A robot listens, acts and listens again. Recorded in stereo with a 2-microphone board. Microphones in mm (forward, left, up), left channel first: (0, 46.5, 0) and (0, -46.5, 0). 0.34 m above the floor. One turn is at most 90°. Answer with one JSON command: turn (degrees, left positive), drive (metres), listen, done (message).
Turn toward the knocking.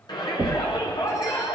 {"turn": -55}
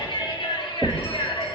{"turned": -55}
{"turn": -25}
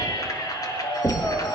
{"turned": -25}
{"done": "Facing the knocking."}